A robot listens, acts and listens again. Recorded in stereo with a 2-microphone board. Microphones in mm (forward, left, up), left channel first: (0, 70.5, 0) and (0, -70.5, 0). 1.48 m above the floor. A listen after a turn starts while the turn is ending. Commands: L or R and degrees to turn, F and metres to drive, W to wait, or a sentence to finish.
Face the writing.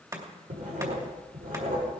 R90
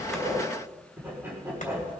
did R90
R15
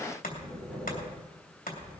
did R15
Facing the writing, over 4 m away.